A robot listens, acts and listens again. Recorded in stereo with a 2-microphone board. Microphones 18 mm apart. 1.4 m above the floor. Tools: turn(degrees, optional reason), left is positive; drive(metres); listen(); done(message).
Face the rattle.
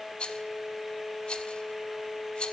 turn(degrees=60, reason="The rattle: about 60° left or 120° left.")
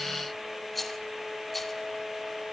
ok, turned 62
done("Found it: a rattle, straight ahead.")